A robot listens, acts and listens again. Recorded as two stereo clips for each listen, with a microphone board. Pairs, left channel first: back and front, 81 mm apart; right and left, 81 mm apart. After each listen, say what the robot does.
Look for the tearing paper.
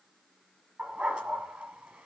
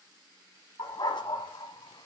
Keep listening.
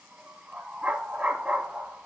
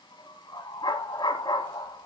Keep listening.
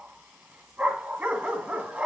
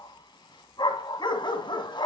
I can't make out tearing paper, only a dog barking.